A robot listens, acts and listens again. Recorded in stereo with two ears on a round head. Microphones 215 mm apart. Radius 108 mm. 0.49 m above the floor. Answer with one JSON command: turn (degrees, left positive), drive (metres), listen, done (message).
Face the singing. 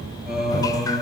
{"turn": -30}
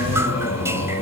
{"turn": 25}
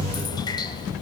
{"listen": true}
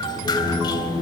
{"done": "Found it: singing, straight ahead."}